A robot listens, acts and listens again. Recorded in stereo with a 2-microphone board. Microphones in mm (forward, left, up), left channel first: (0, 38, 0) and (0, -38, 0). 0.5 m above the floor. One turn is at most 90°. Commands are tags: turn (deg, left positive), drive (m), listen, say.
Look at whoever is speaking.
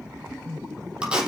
<listen/>
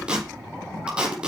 <listen/>
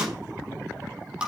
<say>I can't make out anyone speaking, only tape being pulled.</say>